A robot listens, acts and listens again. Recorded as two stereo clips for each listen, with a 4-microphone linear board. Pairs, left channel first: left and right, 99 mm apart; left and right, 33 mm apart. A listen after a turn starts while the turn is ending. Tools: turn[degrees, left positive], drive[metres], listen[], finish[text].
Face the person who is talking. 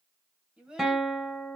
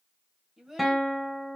Action: turn[-30]
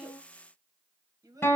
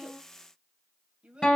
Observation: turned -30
Thought: So it is at 140° right.
Action: turn[-140]
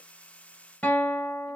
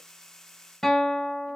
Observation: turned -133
Action: listen[]
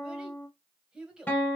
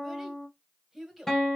Thought: The child speaking is now 10° right.
Action: turn[-10]
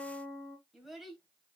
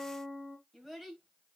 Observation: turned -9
Action: finish[Facing the child speaking.]